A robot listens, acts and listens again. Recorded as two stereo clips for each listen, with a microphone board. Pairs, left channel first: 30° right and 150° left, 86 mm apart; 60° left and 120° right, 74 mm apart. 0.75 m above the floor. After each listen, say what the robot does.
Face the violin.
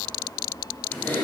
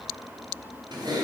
Keep listening.
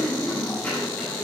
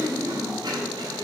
Keep listening.
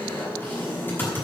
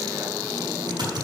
I can't make out a violin to turn to.